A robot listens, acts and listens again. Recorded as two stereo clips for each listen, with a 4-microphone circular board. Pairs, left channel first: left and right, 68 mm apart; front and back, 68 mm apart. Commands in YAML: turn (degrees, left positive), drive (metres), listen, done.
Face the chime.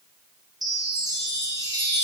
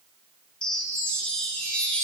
turn: -75
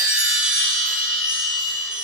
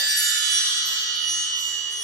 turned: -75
turn: -10
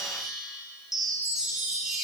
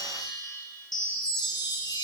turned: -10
done: "Facing the chime, 2 to 4 m away."